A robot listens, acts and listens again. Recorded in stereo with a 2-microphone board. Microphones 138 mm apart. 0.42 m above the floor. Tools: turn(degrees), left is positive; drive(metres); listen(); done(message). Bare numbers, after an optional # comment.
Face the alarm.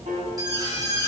# The alarm: about 30° right or 150° right.
turn(-30)
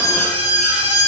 # So it is at 120° right.
turn(-120)
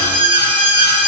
# The alarm is now 45° right.
turn(-45)
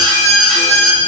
done("Found it: an alarm, straight ahead.")